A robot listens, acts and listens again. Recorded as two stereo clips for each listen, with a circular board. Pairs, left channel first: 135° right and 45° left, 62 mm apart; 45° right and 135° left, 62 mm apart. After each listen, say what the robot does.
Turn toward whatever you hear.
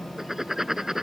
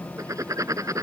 Turn 125° left.
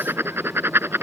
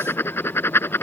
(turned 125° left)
Facing the writing.